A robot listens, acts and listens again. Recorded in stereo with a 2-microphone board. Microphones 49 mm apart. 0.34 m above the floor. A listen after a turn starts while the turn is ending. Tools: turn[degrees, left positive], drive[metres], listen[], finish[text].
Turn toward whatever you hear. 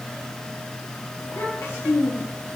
Action: turn[90]
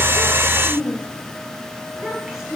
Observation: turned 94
Thought: So it is at 10° right.
Action: turn[-10]
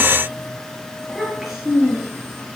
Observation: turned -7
Thought: The child speaking is now 10° right.
Action: turn[-10]
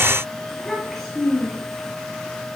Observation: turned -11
Action: finish[Facing the child speaking, over 4 m away.]